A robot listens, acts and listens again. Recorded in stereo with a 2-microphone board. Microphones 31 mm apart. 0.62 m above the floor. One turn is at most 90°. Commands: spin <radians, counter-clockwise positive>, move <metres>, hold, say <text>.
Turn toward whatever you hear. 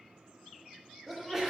spin -0.52
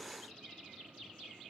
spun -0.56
hold
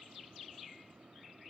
say I heard a sneeze, but can't make it out now. It was about 20° left or 135° right.